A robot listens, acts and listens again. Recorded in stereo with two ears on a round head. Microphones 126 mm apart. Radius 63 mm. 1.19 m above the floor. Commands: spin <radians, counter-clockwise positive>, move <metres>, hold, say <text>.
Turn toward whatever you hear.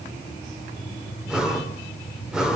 spin -0.52
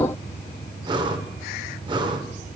spin -2.53
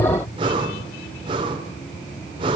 spin -0.61
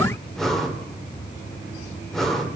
say Facing the breathing.